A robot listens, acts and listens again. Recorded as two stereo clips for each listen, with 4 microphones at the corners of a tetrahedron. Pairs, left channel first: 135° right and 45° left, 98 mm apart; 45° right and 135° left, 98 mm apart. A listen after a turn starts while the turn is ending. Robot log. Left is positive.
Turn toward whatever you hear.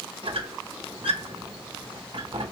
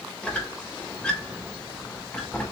note: The squeak: 35° left.
cmd yaw +35
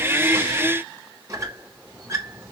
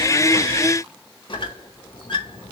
note: The squeak is now 15° right.
cmd yaw -15
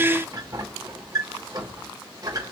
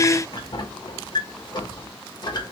end: Found it: a squeak, straight ahead.